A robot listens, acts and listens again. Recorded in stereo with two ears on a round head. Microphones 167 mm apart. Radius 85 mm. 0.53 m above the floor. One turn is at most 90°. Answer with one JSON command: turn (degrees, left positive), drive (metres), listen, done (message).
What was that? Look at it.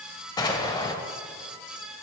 {"turn": 25}
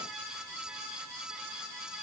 {"listen": true}
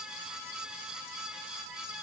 {"done": "I heard an explosion, but can't make it out now. It was about straight ahead or 130° left."}